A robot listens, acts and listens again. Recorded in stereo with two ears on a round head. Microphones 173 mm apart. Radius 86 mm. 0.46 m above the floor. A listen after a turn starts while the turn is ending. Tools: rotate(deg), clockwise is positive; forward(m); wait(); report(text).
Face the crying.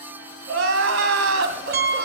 rotate(90)
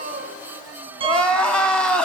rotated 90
report("Facing the crying, 2 to 4 m away.")